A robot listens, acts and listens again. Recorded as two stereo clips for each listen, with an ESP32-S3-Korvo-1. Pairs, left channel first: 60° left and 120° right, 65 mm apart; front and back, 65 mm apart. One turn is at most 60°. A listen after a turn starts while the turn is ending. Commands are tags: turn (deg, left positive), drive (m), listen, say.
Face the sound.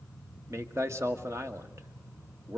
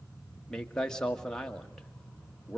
<turn deg="-60"/>
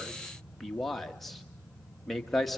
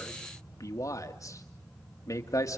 <turn deg="-25"/>
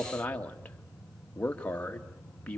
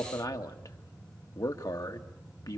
<turn deg="-10"/>
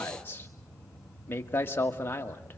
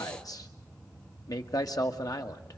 <say>Facing the man speaking, 1 to 2 m away.</say>